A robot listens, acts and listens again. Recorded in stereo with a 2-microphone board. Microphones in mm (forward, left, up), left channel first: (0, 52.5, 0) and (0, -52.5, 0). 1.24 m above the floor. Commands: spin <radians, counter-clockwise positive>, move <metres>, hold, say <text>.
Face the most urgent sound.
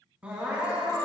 spin -0.52
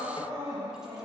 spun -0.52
spin -2.36
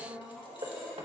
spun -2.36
say Facing the crying, 1 to 2 m away.